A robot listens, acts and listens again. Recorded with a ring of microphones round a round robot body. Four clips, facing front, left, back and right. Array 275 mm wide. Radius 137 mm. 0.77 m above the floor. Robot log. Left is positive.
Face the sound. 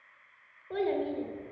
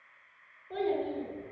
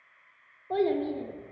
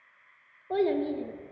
note: The child speaking: 135° right.
cmd yaw -135
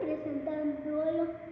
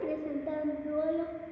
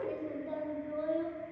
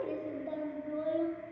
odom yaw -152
note: The child speaking is now 15° left.
cmd yaw +15
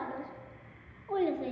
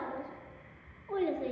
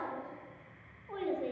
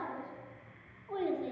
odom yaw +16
end: Facing the child speaking.